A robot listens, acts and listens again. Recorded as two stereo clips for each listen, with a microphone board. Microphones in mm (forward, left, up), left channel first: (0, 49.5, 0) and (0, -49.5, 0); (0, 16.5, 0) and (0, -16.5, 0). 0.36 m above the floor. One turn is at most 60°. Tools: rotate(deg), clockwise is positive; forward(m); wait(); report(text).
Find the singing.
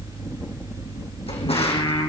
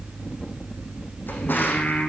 rotate(-45)
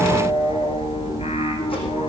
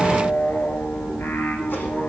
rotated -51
rotate(-60)
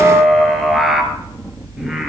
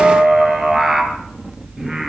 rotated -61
report("Found it: singing, straight ahead.")